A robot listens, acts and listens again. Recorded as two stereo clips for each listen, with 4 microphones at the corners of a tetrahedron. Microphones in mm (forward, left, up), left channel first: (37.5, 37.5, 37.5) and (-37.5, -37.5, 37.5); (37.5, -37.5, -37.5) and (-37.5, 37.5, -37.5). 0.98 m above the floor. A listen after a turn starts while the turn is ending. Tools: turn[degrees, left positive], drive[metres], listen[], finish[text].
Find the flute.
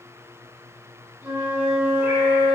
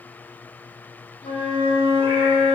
Thought: The flute: 60° right.
Action: turn[-60]
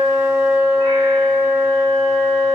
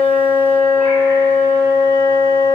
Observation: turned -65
Action: finish[Facing the flute, 1 to 2 m away.]